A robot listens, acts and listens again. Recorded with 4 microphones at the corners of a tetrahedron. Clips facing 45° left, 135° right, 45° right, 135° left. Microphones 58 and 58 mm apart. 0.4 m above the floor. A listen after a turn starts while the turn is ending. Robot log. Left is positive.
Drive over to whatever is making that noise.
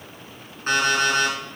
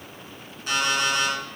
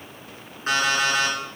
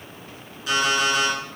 cmd fwd 1.0
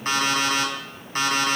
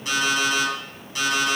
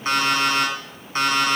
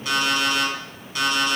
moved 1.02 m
cmd fwd 1.0
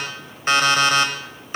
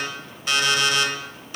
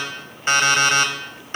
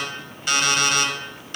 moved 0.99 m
cmd fwd 1.0
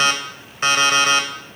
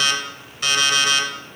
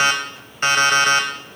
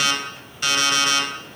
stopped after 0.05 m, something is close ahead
end: I am next to the alarm clock.